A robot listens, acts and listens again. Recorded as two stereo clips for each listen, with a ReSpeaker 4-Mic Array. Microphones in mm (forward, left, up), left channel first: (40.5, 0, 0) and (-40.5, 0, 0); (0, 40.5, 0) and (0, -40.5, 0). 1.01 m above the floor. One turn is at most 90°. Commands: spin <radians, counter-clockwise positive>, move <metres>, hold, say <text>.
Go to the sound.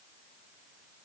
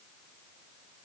hold
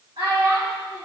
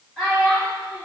spin 1.57
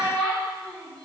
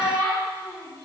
spin 1.40
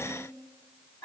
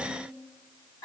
spin 0.79
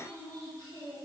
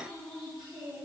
move 1.0
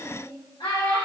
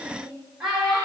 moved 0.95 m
move 1.0
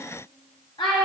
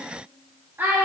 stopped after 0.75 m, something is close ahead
spin -0.35
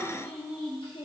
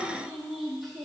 say Arrived at the child speaking, straight ahead.